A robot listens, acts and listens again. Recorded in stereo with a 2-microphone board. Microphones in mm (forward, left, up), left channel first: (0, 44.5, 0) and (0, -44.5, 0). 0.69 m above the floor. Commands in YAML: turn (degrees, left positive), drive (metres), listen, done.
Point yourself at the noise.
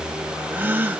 turn: -25
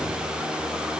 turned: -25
listen: true
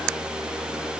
done: "I heard a gasp, but can't make it out now. It was about straight ahead or 130° right."